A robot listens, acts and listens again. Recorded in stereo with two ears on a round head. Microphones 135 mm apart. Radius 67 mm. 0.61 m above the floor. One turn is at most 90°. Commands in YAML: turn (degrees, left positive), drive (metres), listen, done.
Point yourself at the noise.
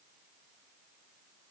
listen: true
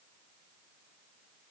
listen: true
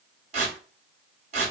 turn: -50
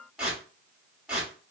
done: "Facing the tearing paper, 1 to 2 m away."